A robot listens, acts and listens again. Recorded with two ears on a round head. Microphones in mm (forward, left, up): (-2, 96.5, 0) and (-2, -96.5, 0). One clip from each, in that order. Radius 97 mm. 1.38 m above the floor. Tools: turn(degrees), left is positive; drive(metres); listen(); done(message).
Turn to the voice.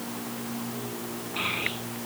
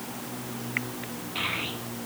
turn(degrees=-60)
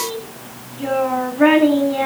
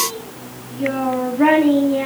done("Facing the child speaking, over 4 m away.")